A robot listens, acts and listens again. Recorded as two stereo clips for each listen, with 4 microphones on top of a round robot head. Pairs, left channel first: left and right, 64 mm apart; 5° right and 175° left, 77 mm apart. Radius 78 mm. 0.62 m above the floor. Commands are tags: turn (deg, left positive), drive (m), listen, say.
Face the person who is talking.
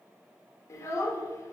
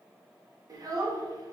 <turn deg="135"/>
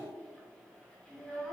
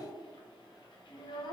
<turn deg="10"/>
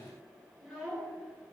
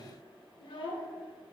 <say>Facing the child speaking.</say>